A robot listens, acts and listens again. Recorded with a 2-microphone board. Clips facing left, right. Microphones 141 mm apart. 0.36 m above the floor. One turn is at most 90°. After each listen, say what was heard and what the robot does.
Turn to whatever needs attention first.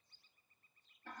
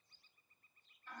Keep listening.
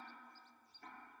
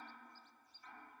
Keep listening.
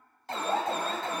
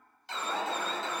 The alarm: about 45° left or 135° left. Turn 45° left.
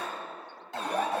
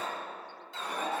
So it is at 80° left. Turn 80° left.
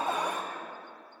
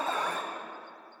The alarm is now 15° left. Turn 15° left.
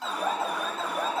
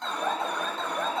Facing the alarm, 1 to 2 m away.